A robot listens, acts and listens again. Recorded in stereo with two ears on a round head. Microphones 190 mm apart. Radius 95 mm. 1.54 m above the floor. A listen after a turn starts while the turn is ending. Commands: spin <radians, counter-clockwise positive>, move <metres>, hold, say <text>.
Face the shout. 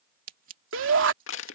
spin -1.22
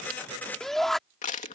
say Found it: a shout, straight ahead.